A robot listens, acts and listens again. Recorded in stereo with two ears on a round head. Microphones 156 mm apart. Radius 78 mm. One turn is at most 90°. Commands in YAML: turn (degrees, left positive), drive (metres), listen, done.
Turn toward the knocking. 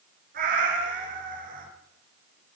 listen: true
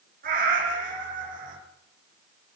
listen: true
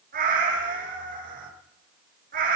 done: "I can't make out knocking, only a cat meowing."